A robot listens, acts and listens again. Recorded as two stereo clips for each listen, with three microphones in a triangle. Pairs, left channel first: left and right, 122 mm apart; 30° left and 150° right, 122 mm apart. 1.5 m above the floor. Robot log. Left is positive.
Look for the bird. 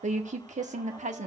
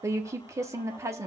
cmd idle
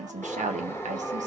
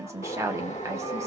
note: The bird: 25° left.
cmd yaw +25
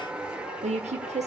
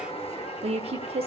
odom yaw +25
end: Facing the bird.